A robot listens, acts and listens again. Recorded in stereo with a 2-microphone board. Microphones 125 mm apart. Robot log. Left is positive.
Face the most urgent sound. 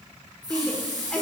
cmd yaw +30
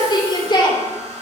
note: So it is at 140° left.
cmd yaw +140
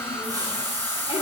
cmd idle
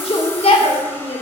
note: The shout is now 55° left.
cmd yaw +55
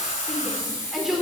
end: Facing the shout, 2 to 4 m away.